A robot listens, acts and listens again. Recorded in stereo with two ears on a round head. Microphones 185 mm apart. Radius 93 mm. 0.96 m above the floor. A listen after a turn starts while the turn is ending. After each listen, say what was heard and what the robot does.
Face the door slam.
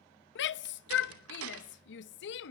Turn 90° right.
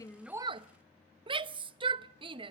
I heard a door slam from this way, but can't make it out now.